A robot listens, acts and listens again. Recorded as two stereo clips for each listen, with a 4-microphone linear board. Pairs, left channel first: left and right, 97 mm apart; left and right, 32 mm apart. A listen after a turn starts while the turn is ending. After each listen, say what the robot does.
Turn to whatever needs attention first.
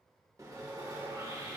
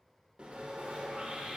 Keep listening.
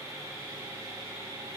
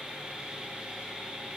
Keep listening.
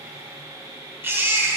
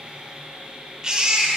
Turn 25° right.
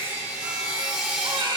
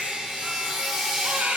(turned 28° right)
Turn 130° right.
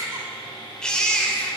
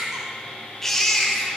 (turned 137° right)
Turn 10° left.
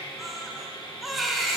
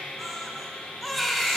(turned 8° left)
Facing the baby crying, under 1 m away.